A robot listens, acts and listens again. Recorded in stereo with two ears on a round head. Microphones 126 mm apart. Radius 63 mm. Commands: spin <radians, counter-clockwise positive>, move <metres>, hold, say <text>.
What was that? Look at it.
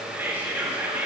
spin -0.52
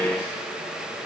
hold
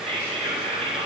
spin -2.36
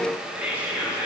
spin -0.17
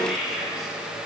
say Facing the whispering.